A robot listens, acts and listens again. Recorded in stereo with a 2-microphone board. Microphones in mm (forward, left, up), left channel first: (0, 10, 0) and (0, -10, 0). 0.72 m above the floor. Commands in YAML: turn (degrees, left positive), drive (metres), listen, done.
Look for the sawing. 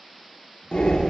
listen: true
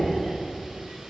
listen: true
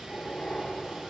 done: "I can't make out sawing to turn to."